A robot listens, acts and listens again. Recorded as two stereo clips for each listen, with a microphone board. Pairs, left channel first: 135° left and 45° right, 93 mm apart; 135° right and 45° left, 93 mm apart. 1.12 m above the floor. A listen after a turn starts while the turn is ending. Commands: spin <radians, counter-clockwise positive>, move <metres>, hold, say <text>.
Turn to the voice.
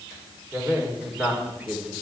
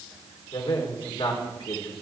spin -2.09
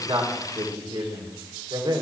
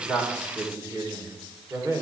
spin -0.26
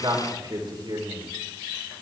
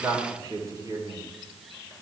say Facing the man speaking, 2 to 4 m away.